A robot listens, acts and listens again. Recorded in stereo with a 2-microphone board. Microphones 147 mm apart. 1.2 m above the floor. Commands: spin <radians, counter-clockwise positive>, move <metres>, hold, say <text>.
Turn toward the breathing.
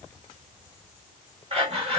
spin -0.79
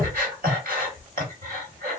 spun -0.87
spin -1.48
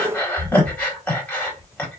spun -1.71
spin 0.26
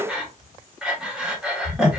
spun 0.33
say Facing the breathing, 1 to 2 m away.